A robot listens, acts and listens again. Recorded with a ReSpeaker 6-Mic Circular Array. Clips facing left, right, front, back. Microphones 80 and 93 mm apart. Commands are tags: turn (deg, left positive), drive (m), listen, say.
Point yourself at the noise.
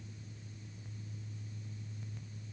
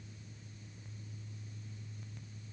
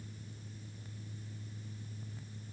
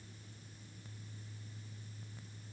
<listen/>
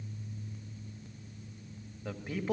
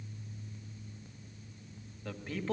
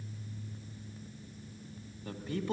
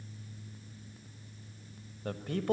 <turn deg="165"/>
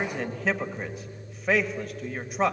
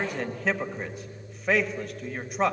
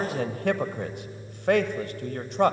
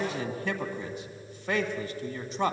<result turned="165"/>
<say>Found it: a man speaking, straight ahead, 1 to 2 m away.</say>